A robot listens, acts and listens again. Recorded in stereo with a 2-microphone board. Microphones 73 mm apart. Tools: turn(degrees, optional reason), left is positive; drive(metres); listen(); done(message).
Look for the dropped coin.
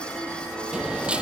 turn(degrees=-30)
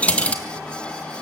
turn(degrees=20, reason="So it is at 20° left.")
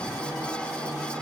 done("Facing where the dropped coin came from. I can't hear it now.")